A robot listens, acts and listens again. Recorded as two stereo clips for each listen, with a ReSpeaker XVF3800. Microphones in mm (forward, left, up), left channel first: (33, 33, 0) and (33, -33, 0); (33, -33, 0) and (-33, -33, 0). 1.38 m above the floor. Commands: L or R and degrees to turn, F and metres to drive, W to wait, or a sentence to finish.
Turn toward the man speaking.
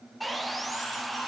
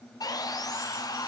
W
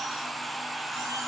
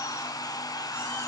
W
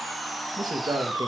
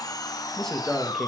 R85
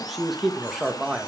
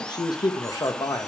Found it: a man speaking, straight ahead.